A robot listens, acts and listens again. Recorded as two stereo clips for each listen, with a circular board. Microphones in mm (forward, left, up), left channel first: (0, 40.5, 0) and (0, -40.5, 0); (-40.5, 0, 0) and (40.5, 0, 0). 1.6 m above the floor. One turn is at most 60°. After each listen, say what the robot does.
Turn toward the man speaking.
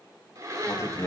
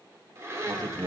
Turn 35° left.
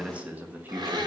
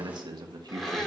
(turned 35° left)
Turn 25° right.
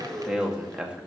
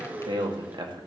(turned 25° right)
Turn 15° right.
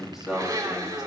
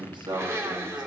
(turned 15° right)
Facing the man speaking, 2 to 4 m away.